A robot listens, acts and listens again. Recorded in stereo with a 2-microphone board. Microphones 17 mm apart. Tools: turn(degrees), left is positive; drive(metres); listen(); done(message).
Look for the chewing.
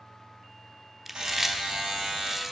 turn(degrees=-15)
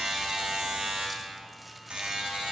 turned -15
listen()
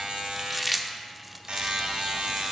done("Found it: chewing, straight ahead, under 1 m away.")